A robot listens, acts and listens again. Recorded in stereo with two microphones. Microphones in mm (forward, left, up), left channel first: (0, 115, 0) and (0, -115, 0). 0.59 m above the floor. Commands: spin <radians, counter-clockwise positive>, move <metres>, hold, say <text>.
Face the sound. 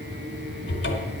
spin 1.22
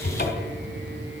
spin 0.70
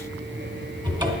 spin -0.35
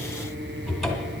say Facing the cupboard door, 1 to 2 m away.